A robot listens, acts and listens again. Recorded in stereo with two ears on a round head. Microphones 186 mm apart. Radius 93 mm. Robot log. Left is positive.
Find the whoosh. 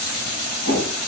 note: The whoosh: about 65° right or 115° right.
cmd yaw -65
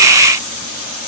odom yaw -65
cmd idle
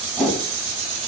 end: Found it: a whoosh, straight ahead, over 4 m away.